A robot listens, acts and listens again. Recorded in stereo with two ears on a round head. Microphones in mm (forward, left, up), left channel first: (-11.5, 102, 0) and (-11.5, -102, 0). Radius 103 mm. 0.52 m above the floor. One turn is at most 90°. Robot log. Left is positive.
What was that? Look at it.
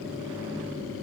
cmd idle
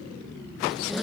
cmd yaw +30
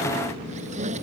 note: So it is at 30° right.
cmd yaw -30
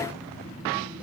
cmd idle
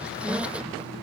end: Found it: a squeak, straight ahead.